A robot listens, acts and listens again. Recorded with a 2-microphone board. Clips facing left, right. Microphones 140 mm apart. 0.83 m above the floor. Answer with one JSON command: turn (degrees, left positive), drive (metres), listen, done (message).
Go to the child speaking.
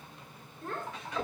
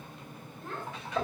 {"turn": 50}
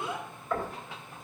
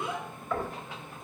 {"drive": 1.0}
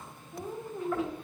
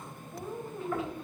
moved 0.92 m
{"drive": 1.0}
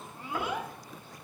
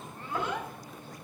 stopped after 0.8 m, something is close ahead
{"turn": 10}
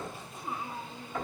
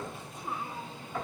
{"done": "I am next to the child speaking."}